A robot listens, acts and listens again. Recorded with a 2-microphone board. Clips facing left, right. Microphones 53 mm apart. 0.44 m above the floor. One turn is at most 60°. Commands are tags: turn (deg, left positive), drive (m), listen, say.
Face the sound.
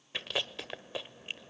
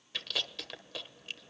<turn deg="25"/>
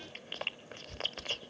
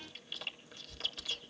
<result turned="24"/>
<turn deg="60"/>
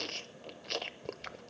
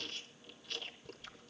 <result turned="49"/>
<turn deg="60"/>
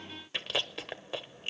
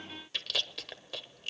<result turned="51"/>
<turn deg="30"/>
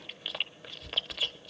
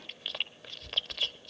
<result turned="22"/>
<turn deg="10"/>
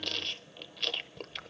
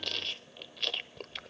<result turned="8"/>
<say>Facing the chewing.</say>